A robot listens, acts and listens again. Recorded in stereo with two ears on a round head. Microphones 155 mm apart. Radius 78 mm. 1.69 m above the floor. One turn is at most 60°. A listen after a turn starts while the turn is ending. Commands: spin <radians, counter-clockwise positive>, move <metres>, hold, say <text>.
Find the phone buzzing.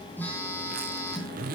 spin 0.52
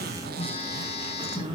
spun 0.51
spin 1.05
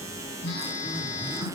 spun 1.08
spin 1.05
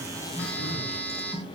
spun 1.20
spin 0.17
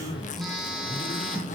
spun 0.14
say Found it: a phone buzzing, straight ahead.